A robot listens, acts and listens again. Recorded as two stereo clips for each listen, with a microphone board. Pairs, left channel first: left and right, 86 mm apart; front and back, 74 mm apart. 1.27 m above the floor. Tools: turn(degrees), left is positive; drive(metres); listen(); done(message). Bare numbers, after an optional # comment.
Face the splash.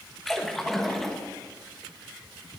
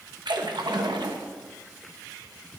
# The splash: 175° left.
turn(175)
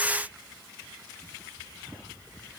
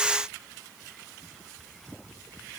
done("I heard a splash from this way, but can't make it out now.")